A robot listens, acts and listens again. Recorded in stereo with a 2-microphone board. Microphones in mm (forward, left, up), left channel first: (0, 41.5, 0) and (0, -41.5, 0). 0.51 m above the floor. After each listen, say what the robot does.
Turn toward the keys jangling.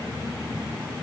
Keep listening.
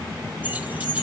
Turn 15° right.
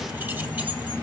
Keep listening.
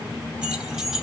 Turn 30° right.
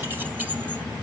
Keep listening.
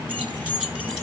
Turn 30° right.
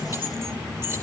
Turn 145° right.
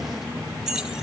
Facing the keys jangling, 2 to 4 m away.